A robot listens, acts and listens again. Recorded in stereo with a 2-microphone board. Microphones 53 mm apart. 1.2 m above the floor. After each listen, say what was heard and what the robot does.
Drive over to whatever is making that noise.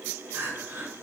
The crying: about 50° right or 130° right. Turn 50° right.
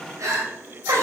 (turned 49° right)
So it is at 75° right. Turn 75° right.
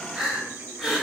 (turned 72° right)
Drive 1.0 m forward.
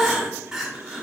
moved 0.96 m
Drive 1.0 m forward.
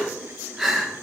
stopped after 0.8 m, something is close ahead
I am next to the crying.